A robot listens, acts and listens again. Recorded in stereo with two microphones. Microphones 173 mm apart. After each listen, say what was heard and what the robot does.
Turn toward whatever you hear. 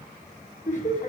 The laughter: about 45° left or 135° left. Turn 45° left.
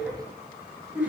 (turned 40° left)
So it is at 10° right. Turn 10° right.
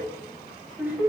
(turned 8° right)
The laughter is now 10° right. Turn 10° right.
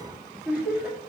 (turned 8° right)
The laughter is now 10° right. Turn 10° right.
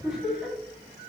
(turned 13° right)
Facing the laughter.